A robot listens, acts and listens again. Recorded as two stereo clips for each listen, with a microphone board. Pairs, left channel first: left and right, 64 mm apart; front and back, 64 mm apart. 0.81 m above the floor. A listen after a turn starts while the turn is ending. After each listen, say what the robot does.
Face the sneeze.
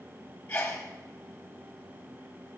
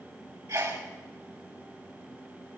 Turn 160° left.
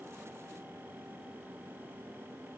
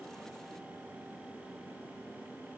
Facing where the sneeze came from. I can't hear it now.